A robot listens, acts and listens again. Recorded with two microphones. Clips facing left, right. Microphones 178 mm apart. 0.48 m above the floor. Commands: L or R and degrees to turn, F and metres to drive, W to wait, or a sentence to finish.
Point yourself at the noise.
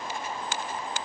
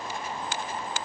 W
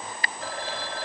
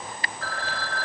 L20
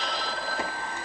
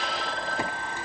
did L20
Facing the phone ringing.